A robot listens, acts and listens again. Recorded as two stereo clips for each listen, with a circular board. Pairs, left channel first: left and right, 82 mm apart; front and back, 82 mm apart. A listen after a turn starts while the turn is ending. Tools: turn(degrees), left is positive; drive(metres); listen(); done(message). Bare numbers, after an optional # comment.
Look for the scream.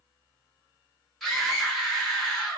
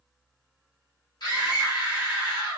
done("Found it: a scream, straight ahead, 1 to 2 m away.")